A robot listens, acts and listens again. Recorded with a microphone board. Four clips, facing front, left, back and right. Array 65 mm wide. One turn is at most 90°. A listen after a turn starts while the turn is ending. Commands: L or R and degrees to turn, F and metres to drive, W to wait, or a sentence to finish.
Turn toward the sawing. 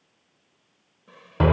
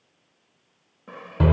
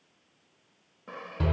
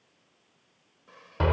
L90
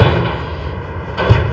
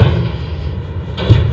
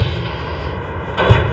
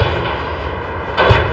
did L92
L45
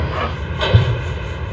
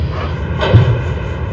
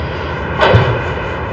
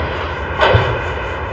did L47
W
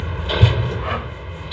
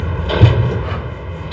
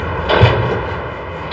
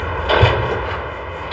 I heard sawing from this way, but can't make it out now.